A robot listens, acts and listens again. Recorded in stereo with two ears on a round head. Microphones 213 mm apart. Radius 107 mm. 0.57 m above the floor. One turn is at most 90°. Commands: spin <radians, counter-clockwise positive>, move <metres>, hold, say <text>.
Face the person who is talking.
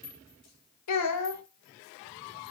spin 1.57
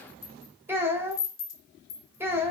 spin -0.17
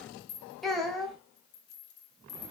say Facing the child speaking.